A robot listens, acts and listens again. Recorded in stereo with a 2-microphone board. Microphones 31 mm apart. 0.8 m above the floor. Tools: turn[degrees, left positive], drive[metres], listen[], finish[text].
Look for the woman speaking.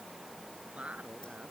Thought: The woman speaking: about 45° right or 135° right.
Action: turn[-45]
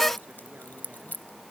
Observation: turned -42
Action: listen[]
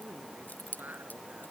Thought: So it is at 95° right.
Action: turn[-95]
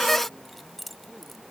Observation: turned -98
Action: listen[]
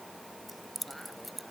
Action: listen[]
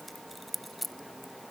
Action: finish[I heard a woman speaking from this way, but can't make it out now.]